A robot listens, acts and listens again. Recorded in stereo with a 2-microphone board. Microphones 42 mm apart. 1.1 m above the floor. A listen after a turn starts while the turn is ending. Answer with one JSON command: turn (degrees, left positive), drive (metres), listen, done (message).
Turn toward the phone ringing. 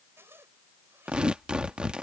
{"listen": true}
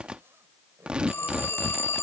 {"turn": 65}
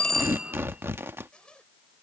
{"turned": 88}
{"listen": true}
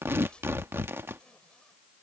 {"listen": true}
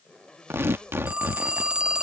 {"turn": -20}
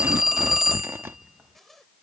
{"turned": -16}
{"done": "Facing the phone ringing."}